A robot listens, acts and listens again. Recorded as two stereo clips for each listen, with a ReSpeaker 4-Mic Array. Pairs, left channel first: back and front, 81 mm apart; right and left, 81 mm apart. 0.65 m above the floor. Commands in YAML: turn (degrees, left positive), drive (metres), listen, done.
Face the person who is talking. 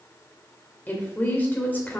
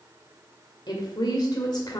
turn: -115
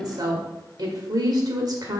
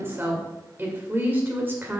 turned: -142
turn: 30
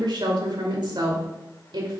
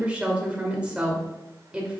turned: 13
turn: 15
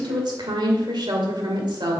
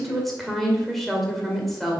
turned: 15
done: "Facing the woman speaking."